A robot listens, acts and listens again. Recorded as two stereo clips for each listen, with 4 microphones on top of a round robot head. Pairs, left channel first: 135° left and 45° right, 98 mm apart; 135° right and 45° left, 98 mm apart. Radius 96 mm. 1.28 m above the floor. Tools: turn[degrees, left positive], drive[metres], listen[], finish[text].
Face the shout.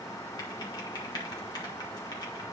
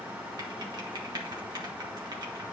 Action: listen[]
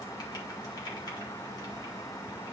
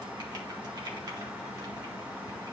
Action: listen[]
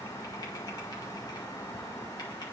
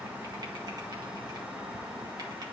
Action: finish[I can't make out a shout.]